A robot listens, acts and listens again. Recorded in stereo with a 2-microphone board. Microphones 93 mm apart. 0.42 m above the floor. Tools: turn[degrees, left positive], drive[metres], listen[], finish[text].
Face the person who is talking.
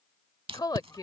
Thought: The woman speaking: about 45° left or 135° left.
Action: turn[45]
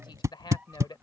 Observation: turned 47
Thought: So it is at 75° left.
Action: turn[75]
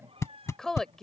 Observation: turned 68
Action: finish[Found it: a woman speaking, straight ahead.]